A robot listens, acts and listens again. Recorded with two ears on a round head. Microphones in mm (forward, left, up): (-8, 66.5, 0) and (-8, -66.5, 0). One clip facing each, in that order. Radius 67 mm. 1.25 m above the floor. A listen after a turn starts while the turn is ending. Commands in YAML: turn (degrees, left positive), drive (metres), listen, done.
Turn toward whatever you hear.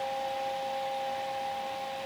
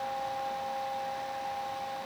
listen: true
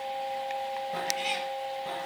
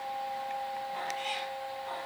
turn: 65
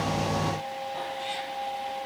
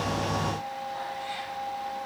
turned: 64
turn: 30
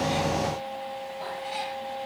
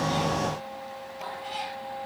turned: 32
done: "Found it: a cat meowing, straight ahead."